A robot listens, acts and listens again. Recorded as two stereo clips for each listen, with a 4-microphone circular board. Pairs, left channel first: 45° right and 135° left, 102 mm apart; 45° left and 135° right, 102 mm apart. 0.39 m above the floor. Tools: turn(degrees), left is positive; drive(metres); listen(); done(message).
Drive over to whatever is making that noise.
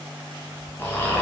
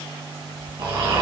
turn(degrees=-110)
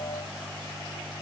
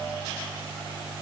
listen()
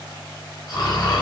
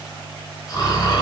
drive(metres=1.0)
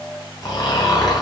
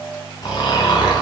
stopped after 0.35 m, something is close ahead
done("Something is in my way. I am facing the snoring but have not reached it.")